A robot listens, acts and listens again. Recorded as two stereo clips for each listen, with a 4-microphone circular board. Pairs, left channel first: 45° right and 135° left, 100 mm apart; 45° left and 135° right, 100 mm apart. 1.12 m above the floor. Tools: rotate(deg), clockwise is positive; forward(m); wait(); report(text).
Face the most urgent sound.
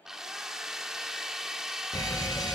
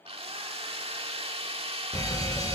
report("Found it: a fire alarm, straight ahead.")